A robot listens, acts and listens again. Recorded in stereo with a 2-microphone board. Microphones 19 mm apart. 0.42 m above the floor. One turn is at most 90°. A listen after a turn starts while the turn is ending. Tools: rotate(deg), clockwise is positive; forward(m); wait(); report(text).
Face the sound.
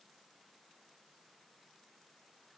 wait()
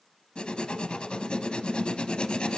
rotate(-70)
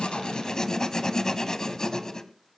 rotate(-40)
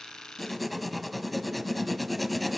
report("Found it: writing, straight ahead.")